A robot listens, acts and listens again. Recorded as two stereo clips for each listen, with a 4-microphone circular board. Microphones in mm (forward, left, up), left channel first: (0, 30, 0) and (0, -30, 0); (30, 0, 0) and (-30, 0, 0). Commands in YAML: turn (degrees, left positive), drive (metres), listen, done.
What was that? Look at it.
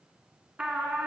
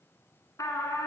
turn: -25
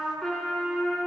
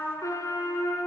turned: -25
done: "Facing the trumpet, 1 to 2 m away."